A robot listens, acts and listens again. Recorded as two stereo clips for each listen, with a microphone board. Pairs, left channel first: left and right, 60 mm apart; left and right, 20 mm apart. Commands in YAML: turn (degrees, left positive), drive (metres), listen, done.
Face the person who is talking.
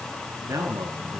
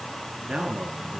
turn: -70
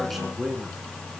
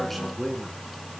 done: "Found it: a man speaking, straight ahead."